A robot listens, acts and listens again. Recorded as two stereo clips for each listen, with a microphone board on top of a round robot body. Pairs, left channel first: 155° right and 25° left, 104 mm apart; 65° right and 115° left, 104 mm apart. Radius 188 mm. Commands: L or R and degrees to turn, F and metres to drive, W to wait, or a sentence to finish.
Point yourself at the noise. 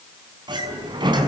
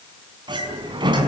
L70
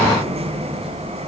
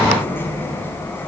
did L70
Found it: a sliding door, straight ahead.